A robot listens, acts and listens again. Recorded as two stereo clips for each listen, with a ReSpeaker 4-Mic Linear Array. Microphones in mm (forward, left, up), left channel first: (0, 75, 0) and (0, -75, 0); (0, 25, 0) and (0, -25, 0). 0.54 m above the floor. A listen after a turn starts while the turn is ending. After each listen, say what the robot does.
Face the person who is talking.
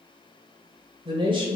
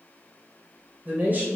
Turn 35° right.
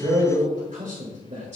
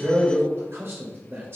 Turn 130° right.
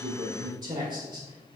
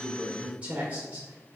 Turn 30° right.
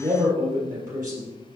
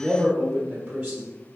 Turn 25° right.
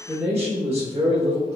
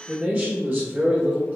Turn 20° right.
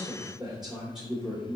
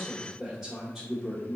Facing the man speaking, 1 to 2 m away.